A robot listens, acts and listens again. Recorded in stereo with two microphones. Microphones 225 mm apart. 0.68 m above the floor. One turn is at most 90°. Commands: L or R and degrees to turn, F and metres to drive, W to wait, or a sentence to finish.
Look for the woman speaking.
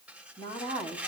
L20
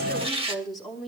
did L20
Found it: a woman speaking, straight ahead, over 4 m away.